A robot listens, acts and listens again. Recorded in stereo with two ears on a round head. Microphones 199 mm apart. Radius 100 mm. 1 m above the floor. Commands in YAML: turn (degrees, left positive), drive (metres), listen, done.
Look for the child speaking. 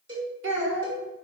turn: -60
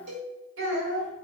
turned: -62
turn: -60
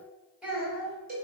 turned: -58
done: "Facing the child speaking."